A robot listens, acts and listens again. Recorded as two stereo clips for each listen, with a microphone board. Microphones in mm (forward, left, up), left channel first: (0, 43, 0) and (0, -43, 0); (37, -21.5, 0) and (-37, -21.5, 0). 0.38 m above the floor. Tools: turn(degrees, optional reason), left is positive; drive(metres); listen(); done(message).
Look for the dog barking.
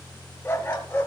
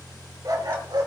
turn(degrees=155, reason="The dog barking: 155° left.")
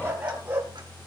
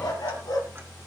turn(degrees=-20, reason="The dog barking is now 20° right.")
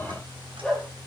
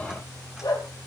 turn(degrees=10, reason="The dog barking is now 10° left.")
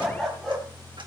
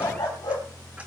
done("Facing the dog barking, over 4 m away.")